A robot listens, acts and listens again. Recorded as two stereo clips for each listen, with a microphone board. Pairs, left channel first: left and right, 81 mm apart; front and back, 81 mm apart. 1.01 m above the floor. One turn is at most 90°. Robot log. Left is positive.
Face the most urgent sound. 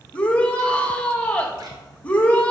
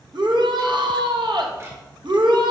note: The shout: 160° left.
cmd yaw +90
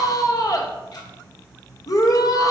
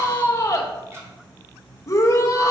note: The shout is now 50° left.
cmd yaw +50
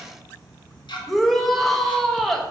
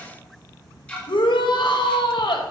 end: Facing the shout, under 1 m away.